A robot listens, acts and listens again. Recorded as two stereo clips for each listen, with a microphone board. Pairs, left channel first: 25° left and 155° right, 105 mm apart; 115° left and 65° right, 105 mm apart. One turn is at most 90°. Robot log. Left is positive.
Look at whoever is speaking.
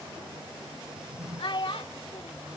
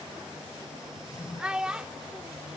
note: The child speaking: 10° left.
cmd yaw +10
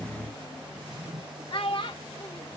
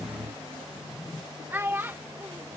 end: Facing the child speaking.